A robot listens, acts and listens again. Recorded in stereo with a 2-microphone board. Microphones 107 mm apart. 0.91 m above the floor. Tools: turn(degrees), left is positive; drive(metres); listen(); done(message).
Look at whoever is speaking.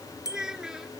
turn(degrees=-30)
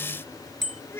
turn(degrees=25)
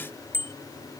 listen()
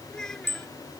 done("Facing the child speaking.")